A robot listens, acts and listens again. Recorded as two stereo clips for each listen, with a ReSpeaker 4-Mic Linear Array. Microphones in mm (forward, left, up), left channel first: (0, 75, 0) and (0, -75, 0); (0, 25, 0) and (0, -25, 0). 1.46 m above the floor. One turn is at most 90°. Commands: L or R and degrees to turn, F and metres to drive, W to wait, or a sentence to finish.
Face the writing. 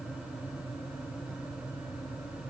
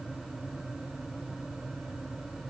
W
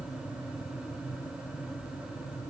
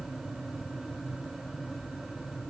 W
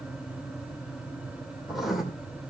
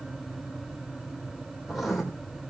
L30
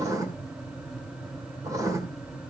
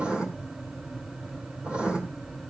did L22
R25
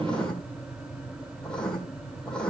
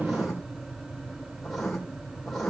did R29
Facing the writing, 2 to 4 m away.